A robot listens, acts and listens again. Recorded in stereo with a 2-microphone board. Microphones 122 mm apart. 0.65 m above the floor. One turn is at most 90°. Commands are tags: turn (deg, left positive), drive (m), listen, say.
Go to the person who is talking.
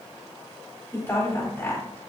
<turn deg="20"/>
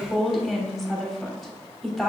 <drive m="1.0"/>
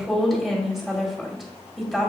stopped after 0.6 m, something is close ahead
<say>Something is in my way. I am facing the woman speaking but have not reached it.</say>